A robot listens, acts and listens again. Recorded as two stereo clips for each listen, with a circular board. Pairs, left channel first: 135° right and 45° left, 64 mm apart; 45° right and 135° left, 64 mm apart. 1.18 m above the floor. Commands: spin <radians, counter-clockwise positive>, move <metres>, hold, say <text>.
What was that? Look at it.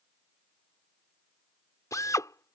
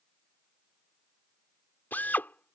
spin -1.83
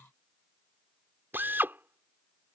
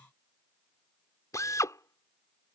spin -0.17
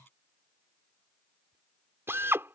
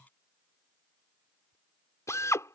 say Found it: a drill, straight ahead.